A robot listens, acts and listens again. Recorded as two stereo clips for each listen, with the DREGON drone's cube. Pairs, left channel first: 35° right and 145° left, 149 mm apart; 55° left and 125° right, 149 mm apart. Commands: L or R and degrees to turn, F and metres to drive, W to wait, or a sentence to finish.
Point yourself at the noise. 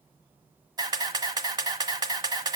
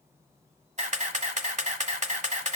R155
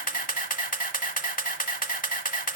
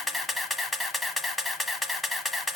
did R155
R35
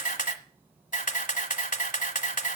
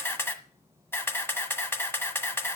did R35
R15
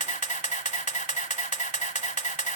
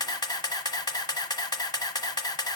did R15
Facing the camera shutter, 1 to 2 m away.